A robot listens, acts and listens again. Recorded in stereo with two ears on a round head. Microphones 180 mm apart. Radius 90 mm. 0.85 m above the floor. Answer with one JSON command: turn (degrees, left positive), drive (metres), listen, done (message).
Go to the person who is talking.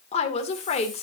{"turn": 30}
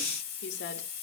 {"turn": 120}
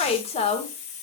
{"turn": 30}
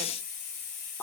{"turn": 10}
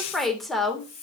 {"drive": 1.0}
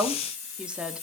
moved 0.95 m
{"drive": 1.0}
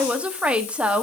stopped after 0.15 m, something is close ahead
{"done": "Arrived at the woman speaking, straight ahead."}